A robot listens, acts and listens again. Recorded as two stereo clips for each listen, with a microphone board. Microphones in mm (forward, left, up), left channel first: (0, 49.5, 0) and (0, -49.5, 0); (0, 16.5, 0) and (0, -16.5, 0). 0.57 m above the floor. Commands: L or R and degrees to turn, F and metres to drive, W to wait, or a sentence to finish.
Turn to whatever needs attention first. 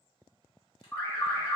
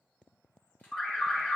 L25
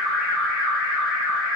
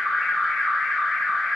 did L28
Facing the alarm.